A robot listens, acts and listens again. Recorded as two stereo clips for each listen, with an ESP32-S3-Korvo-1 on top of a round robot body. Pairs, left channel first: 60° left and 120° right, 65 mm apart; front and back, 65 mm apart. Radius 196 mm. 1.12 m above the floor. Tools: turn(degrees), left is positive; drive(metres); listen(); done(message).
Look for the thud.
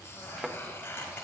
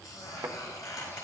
turn(degrees=165)
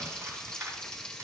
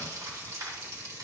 done("I heard a thud from this way, but can't make it out now.")